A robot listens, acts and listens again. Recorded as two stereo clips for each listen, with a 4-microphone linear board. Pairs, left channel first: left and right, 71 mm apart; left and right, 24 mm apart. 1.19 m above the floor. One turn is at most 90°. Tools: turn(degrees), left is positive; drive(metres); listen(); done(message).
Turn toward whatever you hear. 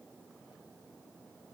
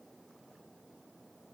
listen()
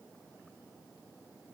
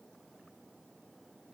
listen()
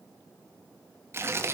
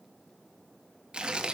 turn(degrees=-35)
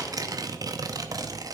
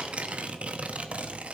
turn(degrees=-90)
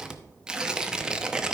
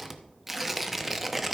turn(degrees=-15)
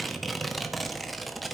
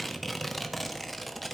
done("Found it: tearing paper, straight ahead.")